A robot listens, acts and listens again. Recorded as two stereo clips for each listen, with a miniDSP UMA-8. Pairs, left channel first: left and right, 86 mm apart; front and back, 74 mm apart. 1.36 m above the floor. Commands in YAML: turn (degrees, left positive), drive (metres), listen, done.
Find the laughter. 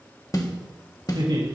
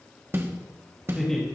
turn: -85
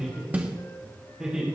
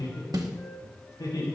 turn: -10
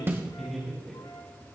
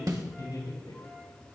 done: "Facing the laughter."